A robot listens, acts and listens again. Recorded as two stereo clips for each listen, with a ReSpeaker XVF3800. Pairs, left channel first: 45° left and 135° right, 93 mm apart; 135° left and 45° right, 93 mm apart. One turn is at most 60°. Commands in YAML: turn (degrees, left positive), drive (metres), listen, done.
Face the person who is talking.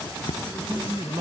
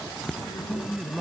turn: -60
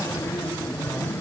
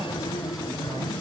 turn: -60
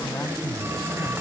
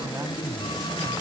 listen: true
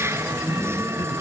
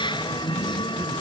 done: "Facing where the man speaking came from. I can't hear it now."